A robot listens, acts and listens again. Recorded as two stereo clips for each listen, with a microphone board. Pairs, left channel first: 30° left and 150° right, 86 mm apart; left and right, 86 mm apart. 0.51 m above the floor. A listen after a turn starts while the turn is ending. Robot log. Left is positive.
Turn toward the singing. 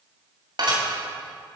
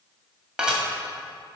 cmd idle
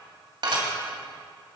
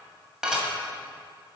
cmd idle
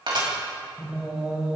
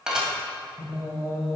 note: The singing: 135° left.
cmd yaw +135
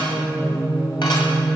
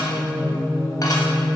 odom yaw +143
note: The singing is now 10° left.
cmd yaw +10
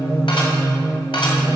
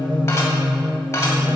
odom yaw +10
end: Found it: singing, straight ahead, 2 to 4 m away.